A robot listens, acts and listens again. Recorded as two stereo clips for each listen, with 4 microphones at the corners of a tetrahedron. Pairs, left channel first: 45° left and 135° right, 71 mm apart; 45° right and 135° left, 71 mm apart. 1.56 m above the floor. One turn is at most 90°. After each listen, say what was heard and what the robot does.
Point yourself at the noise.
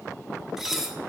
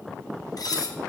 The dishes clattering: 50° right. Turn 50° right.
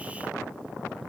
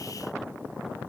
Found it: dishes clattering, straight ahead, under 1 m away.